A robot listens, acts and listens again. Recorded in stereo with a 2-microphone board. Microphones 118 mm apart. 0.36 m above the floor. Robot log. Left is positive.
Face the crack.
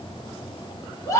cmd idle
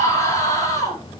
cmd idle
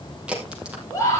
cmd yaw -30
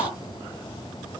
cmd idle
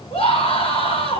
end: I heard a crack, but can't make it out now. It was about 20° left or 140° right.